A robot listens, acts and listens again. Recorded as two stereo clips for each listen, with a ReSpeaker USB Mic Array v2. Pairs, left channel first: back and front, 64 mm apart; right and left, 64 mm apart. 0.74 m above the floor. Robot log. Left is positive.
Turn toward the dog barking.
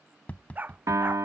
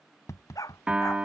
note: The dog barking: 60° right.
cmd yaw -60
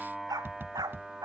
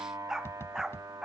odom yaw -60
note: The dog barking is now 10° left.
cmd yaw +10
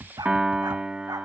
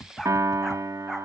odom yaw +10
cmd idle
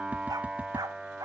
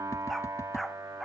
end: Found it: a dog barking, straight ahead.